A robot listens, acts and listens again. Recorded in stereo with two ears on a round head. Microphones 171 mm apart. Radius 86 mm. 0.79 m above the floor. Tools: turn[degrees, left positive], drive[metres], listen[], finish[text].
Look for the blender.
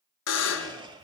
Thought: The blender: about 25° right or 155° right.
Action: turn[-25]
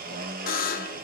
Thought: So it is at 130° right.
Action: turn[-130]
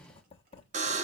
Action: listen[]
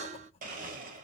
Thought: The blender is now 45° right.
Action: turn[-45]
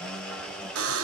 Action: finish[Facing the blender.]